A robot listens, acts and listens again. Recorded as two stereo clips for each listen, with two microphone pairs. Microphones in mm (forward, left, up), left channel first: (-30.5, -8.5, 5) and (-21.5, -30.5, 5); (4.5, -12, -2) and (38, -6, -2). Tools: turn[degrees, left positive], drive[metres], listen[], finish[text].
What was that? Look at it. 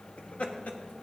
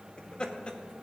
Thought: The laughter: 135° left.
Action: turn[135]
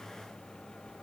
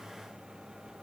Action: listen[]
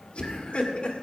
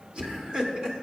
Thought: The laughter is now 80° left.
Action: turn[80]
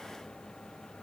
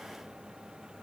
Action: listen[]
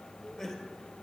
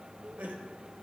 Thought: The laughter is now 20° left.
Action: turn[20]
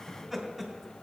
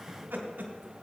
Action: finish[Found it: laughter, straight ahead, 2 to 4 m away.]